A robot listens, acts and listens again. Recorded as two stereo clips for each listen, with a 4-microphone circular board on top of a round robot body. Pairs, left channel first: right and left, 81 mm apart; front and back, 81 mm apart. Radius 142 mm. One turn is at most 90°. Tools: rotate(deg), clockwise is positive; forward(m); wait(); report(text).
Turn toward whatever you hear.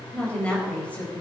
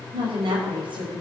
rotate(90)
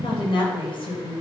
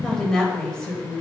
rotate(80)
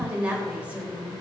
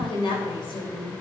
rotate(-20)
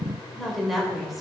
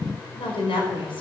report("Facing the woman speaking.")